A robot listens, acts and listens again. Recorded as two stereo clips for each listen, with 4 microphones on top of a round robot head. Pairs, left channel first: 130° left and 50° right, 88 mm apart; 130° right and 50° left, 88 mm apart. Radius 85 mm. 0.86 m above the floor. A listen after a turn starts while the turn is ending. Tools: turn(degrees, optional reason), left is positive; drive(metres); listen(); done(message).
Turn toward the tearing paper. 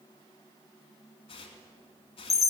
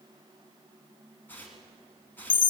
turn(degrees=155, reason="The tearing paper: 155° left.")
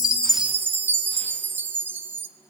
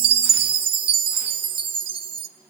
listen()
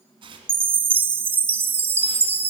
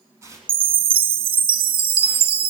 turn(degrees=-10, reason="The tearing paper is now 10° right.")
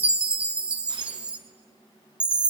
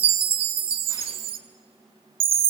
listen()
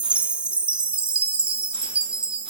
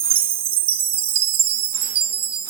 listen()
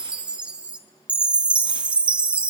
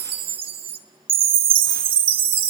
done("I heard tearing paper from this way, but can't make it out now.")